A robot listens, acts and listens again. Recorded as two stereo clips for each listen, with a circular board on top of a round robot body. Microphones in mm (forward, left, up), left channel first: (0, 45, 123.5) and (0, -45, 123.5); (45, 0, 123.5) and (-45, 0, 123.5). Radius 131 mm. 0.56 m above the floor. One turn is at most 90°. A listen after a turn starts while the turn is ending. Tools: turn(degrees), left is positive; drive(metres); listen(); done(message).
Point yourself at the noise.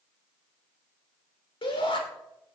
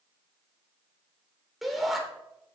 turn(degrees=90)
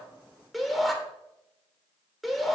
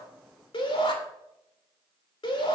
done("Facing the shout.")